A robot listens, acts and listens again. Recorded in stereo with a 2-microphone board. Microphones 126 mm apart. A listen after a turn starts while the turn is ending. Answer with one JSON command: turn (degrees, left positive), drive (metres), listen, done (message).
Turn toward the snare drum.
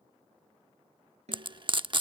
{"turn": -60}
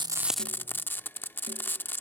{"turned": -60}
{"listen": true}
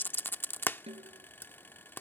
{"turn": -55}
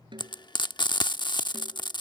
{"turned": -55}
{"listen": true}
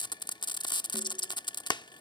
{"listen": true}
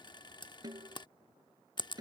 {"turn": -35}
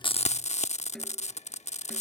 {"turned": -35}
{"done": "Facing the snare drum."}